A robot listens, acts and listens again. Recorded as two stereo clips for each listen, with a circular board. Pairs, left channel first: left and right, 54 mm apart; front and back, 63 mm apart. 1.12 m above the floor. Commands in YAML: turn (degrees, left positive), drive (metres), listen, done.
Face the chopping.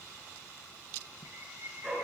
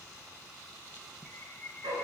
listen: true
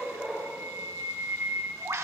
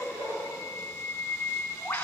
listen: true
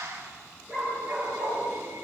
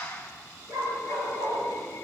done: "I can't make out chopping, only a dog barking and a bird."